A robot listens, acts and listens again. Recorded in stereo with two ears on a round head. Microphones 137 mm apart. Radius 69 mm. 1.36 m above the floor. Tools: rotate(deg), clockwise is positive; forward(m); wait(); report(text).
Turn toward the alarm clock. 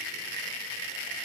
wait()
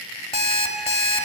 rotate(-40)
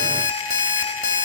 rotate(-90)
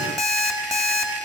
report("Facing the alarm clock, 1 to 2 m away.")